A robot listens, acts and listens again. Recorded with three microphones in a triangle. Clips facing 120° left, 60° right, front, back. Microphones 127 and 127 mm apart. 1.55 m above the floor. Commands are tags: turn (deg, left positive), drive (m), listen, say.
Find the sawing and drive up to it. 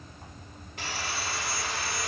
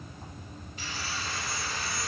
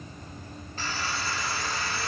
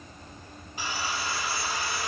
<turn deg="105"/>
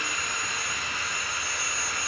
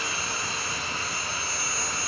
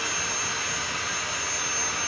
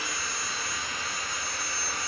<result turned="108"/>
<drive m="1.0"/>
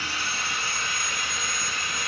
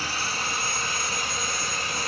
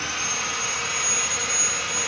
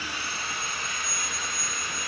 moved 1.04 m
<turn deg="-10"/>
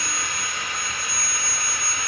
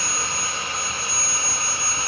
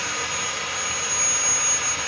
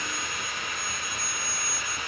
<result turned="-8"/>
<drive m="1.0"/>
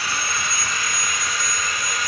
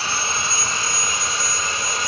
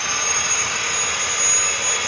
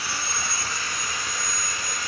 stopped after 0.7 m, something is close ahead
<say>I am next to the sawing.</say>